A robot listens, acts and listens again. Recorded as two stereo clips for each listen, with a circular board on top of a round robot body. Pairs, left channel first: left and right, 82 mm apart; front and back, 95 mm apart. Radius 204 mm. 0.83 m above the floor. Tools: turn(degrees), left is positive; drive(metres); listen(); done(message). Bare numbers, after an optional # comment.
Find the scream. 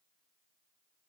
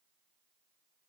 listen()
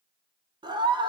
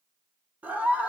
# The scream: 105° right.
turn(-105)
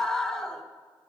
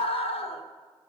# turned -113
done("Facing the scream.")